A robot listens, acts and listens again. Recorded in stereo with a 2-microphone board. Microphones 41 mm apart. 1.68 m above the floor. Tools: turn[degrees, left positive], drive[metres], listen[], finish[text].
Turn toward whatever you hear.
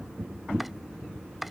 Action: turn[-30]
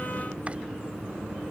Action: listen[]
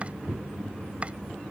Action: listen[]
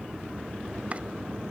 Action: finish[I heard chopping, but can't make it out now. It was about 25° left or 145° right.]